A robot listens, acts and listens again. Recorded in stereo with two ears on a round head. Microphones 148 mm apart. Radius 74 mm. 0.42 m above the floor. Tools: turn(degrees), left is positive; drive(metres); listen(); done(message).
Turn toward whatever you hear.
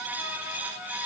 listen()
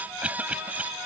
turn(degrees=-30)
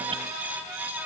listen()
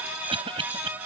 turn(degrees=-140)
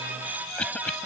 turn(degrees=10)
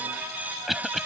done("Found it: a cough, straight ahead.")